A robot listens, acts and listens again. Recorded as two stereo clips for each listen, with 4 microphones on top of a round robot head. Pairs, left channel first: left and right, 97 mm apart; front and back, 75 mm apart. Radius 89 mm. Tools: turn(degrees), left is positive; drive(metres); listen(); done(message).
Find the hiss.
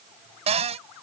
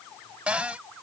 listen()
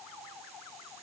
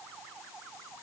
listen()
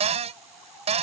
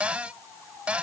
done("I can't make out a hiss, only a cupboard door.")